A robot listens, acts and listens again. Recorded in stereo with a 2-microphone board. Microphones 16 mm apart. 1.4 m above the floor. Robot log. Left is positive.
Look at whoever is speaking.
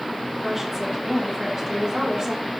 note: The woman speaking: about 30° right or 150° right.
cmd yaw -30
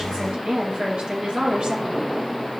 note: So it is at 100° right.
cmd yaw -100
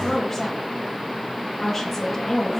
note: The woman speaking is now 10° left.
cmd yaw +10
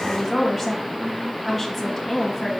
end: Found it: a woman speaking, straight ahead.